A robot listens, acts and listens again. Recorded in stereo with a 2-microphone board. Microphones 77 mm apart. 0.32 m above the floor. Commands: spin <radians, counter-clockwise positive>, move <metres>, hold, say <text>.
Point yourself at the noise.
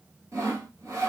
spin -0.79
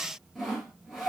say Facing the sawing, 2 to 4 m away.